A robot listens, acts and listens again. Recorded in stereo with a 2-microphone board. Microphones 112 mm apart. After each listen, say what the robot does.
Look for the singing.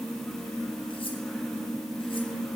Keep listening.
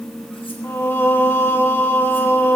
Turn 20° left.
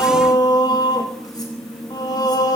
Turn 145° left.
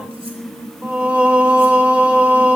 Turn 10° right.
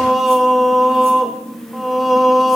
Found it: singing, straight ahead.